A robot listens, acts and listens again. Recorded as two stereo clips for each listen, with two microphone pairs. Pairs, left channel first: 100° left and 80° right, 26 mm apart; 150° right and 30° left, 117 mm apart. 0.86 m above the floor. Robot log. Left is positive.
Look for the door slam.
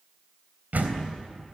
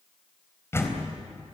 note: The door slam: 80° right.
cmd yaw -80
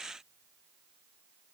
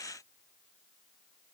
end: I heard a door slam from this way, but can't make it out now.